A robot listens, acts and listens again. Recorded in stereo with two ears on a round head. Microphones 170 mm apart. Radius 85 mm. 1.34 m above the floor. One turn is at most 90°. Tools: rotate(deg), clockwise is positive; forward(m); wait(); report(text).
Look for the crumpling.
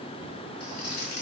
rotate(-55)
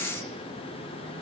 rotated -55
wait()
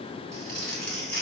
report("Facing the crumpling, 2 to 4 m away.")